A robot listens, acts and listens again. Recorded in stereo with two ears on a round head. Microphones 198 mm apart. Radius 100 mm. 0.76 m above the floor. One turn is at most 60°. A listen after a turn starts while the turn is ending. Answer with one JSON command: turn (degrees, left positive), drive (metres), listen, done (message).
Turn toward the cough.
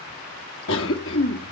{"turn": 60}
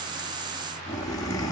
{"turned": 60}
{"turn": 20}
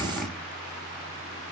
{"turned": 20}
{"done": "Found it: a cough, straight ahead, 1 to 2 m away."}